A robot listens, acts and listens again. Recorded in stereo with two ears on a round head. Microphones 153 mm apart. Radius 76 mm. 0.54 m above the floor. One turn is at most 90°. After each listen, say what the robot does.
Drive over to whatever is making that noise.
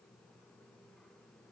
Keep listening.
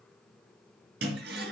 Turn 70° right.
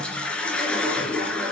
Drive 1.0 m forward.
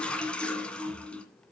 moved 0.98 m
Drive 1.0 m forward.
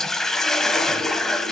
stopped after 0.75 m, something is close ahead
I am next to the toilet flushing.